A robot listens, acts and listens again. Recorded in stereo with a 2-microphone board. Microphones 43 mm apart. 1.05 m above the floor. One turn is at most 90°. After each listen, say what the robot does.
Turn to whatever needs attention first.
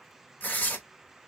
Keep listening.
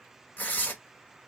Keep listening.
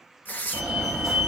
Turn 30° right.
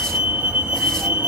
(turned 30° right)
Turn 90° right.
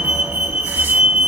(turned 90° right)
Turn 70° right.
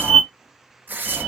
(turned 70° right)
Found it: a fire alarm, straight ahead, 2 to 4 m away.